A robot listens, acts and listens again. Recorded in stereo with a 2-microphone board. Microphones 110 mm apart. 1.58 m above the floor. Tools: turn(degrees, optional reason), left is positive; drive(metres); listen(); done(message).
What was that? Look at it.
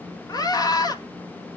turn(degrees=35, reason="The scream: about 35° left or 145° left.")
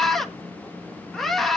done("Facing the scream.")